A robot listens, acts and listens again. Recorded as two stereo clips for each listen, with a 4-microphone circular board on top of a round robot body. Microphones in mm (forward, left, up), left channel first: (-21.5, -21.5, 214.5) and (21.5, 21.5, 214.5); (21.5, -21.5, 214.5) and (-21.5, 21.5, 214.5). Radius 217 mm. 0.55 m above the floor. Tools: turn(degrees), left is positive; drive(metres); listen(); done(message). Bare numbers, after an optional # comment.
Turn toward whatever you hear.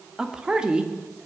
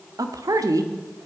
# The woman speaking: 115° left.
turn(115)
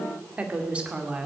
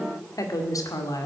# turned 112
# The woman speaking is now 25° right.
turn(-25)
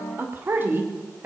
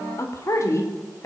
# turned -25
# The woman speaking is now 10° right.
turn(-10)
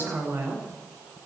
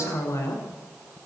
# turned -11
done("Facing the woman speaking, 2 to 4 m away.")